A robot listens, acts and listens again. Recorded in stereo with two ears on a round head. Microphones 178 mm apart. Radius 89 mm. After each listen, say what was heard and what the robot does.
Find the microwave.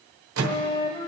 Turn 90° right.
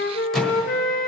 Found it: a microwave, straight ahead.